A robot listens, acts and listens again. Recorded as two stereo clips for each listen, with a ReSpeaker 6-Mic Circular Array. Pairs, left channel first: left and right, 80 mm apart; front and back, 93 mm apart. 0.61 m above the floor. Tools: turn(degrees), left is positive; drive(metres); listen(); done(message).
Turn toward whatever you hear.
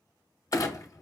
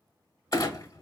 turn(degrees=45)
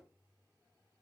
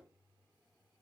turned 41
done("Facing where the clunk came from. I can't hear it now.")